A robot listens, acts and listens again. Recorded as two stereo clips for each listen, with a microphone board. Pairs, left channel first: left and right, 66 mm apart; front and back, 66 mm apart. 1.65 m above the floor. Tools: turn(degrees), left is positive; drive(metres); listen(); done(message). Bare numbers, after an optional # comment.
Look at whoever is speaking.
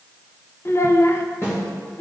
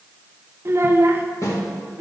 # The child speaking: 130° left.
turn(130)
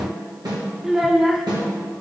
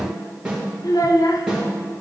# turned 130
# The child speaking is now 10° right.
turn(-10)
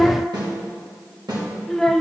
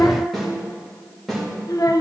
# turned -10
done("Found it: a child speaking, straight ahead.")